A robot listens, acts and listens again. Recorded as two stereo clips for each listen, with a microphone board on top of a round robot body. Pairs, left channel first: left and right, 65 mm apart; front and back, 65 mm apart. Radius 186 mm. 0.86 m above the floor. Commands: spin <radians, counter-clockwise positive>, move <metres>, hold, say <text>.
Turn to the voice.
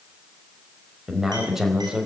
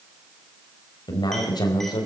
say Found it: a man speaking, straight ahead, over 4 m away.